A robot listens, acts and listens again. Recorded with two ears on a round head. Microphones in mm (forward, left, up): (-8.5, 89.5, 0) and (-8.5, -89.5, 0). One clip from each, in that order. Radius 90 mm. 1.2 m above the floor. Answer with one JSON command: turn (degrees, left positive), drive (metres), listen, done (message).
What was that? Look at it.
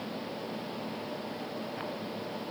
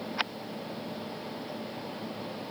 {"listen": true}
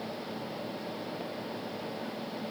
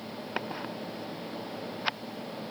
{"listen": true}
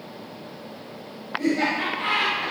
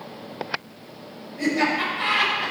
{"turn": -40}
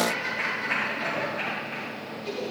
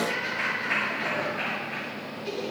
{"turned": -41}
{"done": "Facing the laughter."}